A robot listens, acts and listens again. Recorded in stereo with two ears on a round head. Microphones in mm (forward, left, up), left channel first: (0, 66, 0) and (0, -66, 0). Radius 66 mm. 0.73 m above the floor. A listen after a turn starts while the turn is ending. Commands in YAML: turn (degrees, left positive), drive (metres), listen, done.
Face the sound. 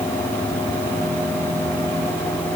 listen: true
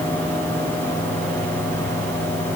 listen: true
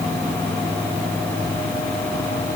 done: "I can't make out anything."